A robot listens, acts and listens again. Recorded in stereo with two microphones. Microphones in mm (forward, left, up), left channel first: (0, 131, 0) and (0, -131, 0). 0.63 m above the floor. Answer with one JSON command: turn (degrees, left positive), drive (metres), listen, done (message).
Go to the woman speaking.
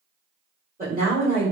{"turn": -30}
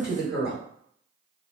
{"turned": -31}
{"drive": 1.0}
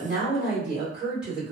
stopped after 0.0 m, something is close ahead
{"done": "Something is in my way. I am facing the woman speaking but have not reached it."}